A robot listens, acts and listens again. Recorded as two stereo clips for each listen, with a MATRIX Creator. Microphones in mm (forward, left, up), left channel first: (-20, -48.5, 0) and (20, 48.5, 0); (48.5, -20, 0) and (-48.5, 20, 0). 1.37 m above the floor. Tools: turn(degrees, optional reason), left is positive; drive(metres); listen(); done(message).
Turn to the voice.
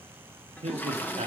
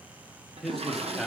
turn(degrees=65, reason="The man speaking: 65° left.")
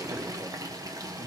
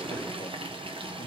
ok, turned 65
listen()
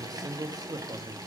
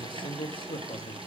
turn(degrees=15, reason="The man speaking is now 15° left.")
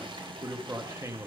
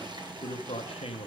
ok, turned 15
done("Found it: a man speaking, straight ahead, under 1 m away.")